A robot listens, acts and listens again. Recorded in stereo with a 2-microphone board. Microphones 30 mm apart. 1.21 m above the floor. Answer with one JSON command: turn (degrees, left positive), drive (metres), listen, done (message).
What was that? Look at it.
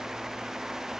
{"listen": true}
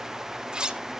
{"turn": -30}
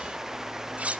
{"turn": -115}
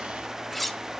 {"done": "Facing the cutlery clinking, under 1 m away."}